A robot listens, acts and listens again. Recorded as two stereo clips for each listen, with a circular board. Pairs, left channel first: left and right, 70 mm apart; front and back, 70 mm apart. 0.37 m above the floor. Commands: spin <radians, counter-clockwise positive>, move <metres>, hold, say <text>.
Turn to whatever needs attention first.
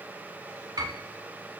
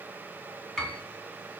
hold
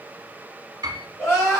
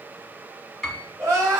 spin 2.36
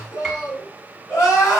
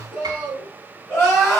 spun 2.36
spin 0.87
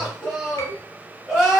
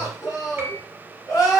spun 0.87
spin -0.26
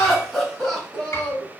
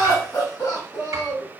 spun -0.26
say Facing the crying.